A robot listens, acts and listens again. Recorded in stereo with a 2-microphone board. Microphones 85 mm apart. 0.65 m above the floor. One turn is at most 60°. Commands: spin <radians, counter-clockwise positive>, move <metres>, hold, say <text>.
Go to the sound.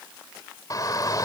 spin 0.79
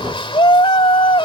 spin 1.05
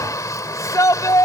spin 0.70
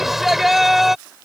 move 1.0
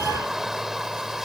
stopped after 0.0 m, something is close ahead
say Blocked. The shout is further on, straight ahead.